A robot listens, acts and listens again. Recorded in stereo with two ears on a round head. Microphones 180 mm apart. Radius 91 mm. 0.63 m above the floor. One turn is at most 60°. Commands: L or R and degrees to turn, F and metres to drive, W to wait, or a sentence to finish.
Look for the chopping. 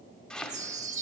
L30
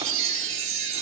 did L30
W
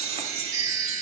W
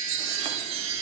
I heard chopping, but can't make it out now. It was about 25° right or 145° left.